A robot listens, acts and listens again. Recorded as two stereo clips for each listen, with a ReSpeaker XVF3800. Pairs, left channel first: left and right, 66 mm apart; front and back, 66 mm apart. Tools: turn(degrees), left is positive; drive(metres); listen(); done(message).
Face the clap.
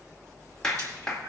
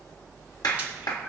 turn(degrees=10)
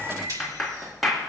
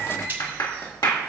done("Found it: a clap, straight ahead.")